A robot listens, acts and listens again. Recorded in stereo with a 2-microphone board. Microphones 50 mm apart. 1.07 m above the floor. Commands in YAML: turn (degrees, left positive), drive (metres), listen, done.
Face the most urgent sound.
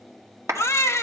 turn: 65
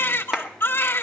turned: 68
turn: 45
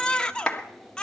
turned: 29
turn: 15
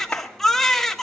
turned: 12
done: "Found it: a baby crying, straight ahead."